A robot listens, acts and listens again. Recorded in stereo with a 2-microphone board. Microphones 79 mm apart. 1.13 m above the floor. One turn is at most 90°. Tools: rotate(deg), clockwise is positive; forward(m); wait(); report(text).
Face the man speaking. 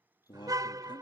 rotate(-90)
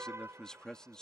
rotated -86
rotate(-10)
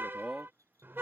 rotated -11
report("Found it: a man speaking, straight ahead.")